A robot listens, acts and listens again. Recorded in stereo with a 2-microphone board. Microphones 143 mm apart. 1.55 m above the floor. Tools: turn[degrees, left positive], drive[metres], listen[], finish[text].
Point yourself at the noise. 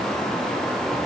Action: listen[]
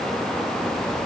Action: listen[]
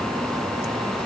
Action: finish[I can't make out anything.]